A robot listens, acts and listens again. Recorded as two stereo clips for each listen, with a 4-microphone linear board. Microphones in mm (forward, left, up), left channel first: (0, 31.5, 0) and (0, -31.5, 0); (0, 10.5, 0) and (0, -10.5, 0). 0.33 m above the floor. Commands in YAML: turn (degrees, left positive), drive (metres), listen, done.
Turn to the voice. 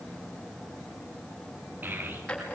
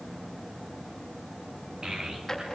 turn: -30
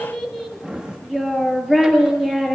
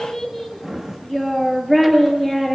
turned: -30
done: "Facing the child speaking, over 4 m away."